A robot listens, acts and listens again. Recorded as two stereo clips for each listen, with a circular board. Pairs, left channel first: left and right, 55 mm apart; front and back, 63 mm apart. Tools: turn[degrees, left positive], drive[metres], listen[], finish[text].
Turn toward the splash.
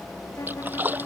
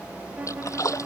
Thought: The splash: 35° right.
Action: turn[-35]
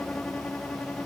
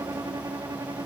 Action: finish[I heard a splash from this way, but can't make it out now.]